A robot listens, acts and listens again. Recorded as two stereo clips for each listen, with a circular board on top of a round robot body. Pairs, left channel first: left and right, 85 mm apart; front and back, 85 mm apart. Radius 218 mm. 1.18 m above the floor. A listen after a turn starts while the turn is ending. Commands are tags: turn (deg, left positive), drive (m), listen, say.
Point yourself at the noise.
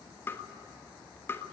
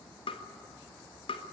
<turn deg="25"/>
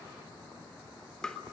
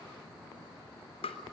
<say>Found it: tapping, straight ahead, 1 to 2 m away.</say>